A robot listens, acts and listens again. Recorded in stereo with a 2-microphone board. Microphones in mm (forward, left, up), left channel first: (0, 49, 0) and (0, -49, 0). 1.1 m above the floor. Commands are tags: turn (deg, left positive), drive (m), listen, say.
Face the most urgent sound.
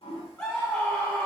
<turn deg="15"/>
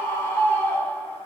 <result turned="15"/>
<turn deg="150"/>
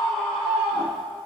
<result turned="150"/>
<say>Facing the scream.</say>